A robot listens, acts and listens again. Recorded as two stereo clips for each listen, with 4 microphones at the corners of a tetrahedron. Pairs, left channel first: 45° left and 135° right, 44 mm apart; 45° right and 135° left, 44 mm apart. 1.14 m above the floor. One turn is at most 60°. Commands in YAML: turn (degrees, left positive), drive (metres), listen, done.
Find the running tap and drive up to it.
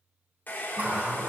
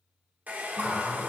turn: -60
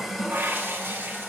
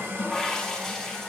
turn: -60
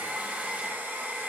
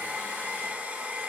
turn: -60
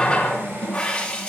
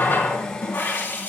turn: -20
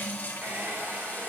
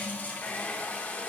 drive: 1.0
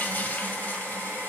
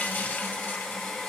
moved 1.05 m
drive: 1.0
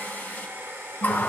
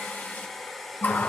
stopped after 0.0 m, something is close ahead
done: "I am next to the running tap."